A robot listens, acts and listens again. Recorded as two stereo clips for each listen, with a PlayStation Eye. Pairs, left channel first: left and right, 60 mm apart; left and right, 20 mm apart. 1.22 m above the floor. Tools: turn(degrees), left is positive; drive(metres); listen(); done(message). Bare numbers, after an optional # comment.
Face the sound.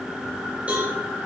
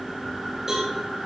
# The cowbell: about 25° right or 155° right.
turn(-25)
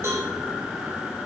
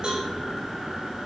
# So it is at 130° right.
turn(-130)
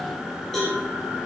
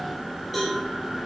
done("Found it: a cowbell, straight ahead, over 4 m away.")